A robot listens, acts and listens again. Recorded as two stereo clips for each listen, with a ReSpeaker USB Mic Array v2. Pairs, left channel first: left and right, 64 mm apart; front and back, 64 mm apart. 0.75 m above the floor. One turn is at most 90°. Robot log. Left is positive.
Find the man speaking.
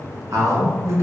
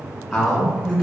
note: The man speaking: 100° right.
cmd yaw -90
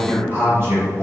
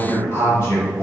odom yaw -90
note: The man speaking is now 55° right.
cmd yaw -55
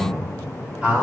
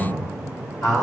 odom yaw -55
note: The man speaking is now 20° right.
cmd yaw -20
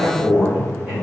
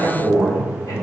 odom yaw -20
note: The man speaking is now 20° right.
cmd yaw -20
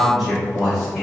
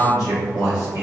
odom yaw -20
end: Found it: a man speaking, straight ahead.